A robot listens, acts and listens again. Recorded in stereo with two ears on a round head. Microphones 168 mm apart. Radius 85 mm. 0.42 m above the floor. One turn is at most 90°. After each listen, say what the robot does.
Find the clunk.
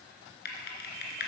Keep listening.
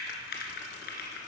Keep listening.
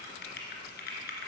I can't make out a clunk to turn to.